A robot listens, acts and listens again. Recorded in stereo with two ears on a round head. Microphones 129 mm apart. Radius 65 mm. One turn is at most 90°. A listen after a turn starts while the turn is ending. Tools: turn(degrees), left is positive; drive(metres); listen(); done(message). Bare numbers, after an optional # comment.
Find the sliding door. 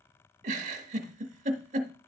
listen()
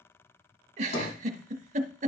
turn(90)
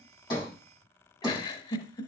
done("Found it: a sliding door, straight ahead, over 4 m away.")